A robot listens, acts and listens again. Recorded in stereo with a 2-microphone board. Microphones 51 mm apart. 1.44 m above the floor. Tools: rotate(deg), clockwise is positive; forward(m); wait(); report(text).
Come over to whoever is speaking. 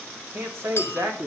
rotate(55)
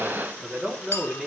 forward(1.0)
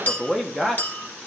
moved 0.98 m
rotate(-10)
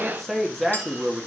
forward(1.0)
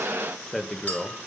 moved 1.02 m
forward(1.0)
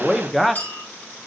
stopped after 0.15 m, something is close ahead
report("I am next to the man speaking.")